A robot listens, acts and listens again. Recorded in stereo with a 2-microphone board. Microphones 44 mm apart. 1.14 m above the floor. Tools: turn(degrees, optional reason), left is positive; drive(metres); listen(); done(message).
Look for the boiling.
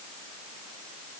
listen()
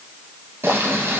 turn(degrees=-65, reason="The boiling: about 65° right or 115° right.")
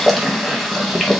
done("Found it: boiling, straight ahead.")